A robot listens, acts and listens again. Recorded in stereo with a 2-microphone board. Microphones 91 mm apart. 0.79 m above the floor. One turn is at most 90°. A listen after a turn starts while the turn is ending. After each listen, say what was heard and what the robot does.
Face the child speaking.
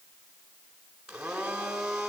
Keep listening.
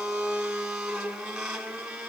Keep listening.
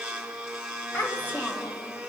The child speaking: about 20° left or 160° left. Turn 20° left.
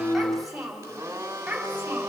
Facing the child speaking, over 4 m away.